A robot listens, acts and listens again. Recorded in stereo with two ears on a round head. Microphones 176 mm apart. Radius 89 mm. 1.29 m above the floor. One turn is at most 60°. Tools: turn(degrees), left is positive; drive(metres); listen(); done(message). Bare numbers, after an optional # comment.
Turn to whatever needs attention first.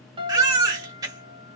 # The baby crying: about 20° right or 160° right.
turn(-20)
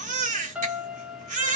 # So it is at 140° right.
turn(-60)
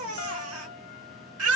# The baby crying is now 80° right.
turn(-60)
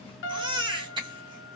# The baby crying is now 25° right.
turn(-25)
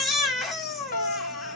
done("Facing the baby crying.")